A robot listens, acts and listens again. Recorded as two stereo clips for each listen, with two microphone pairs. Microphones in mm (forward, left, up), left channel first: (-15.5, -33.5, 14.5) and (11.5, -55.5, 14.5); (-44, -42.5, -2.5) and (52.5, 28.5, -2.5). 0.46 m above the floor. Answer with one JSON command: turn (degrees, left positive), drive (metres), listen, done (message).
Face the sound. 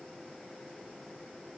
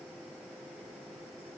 {"listen": true}
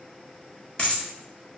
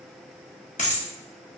{"turn": -155}
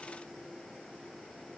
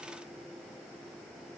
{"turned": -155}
{"done": "Facing where the dropped coin came from. I can't hear it now."}